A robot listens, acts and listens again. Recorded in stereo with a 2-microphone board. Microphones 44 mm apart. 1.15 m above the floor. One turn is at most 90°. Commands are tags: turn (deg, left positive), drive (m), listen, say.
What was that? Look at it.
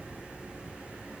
<listen/>
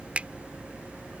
<turn deg="-30"/>
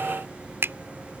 <turn deg="-90"/>
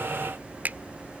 <turn deg="-45"/>
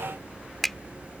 <say>Found it: a finger snap, straight ahead.</say>